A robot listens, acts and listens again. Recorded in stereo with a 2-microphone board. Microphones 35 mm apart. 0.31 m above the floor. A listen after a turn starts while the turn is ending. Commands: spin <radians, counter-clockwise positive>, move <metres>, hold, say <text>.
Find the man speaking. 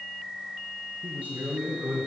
spin -1.05
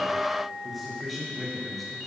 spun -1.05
say Found it: a man speaking, straight ahead, over 4 m away.